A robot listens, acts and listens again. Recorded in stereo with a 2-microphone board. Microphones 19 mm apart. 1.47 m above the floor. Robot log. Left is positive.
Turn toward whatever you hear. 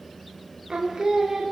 note: The singing: about 35° right or 145° right.
cmd yaw -35
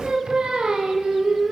note: So it is at 125° right.
cmd yaw -125
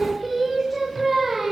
end: Found it: singing, straight ahead, over 4 m away.